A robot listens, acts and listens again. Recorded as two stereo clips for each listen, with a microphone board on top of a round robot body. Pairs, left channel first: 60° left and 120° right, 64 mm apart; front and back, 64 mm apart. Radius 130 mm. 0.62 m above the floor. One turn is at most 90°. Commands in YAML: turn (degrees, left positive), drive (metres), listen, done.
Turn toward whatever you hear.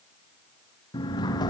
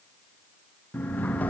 turn: 70
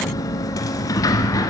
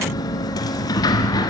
turn: 25
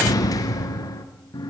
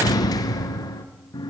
turn: 25
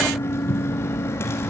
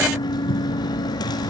done: "Facing the sliding door, 1 to 2 m away."